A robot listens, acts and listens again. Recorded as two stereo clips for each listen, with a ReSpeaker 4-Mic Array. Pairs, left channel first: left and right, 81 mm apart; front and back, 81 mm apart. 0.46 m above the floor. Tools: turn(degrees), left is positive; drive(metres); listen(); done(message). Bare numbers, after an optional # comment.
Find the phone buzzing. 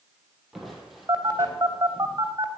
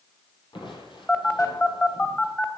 # The phone buzzing: 65° right.
turn(-65)
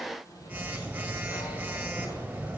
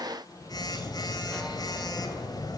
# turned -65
# The phone buzzing is now 20° right.
turn(-20)
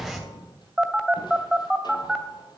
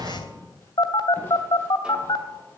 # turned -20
done("Facing the phone buzzing.")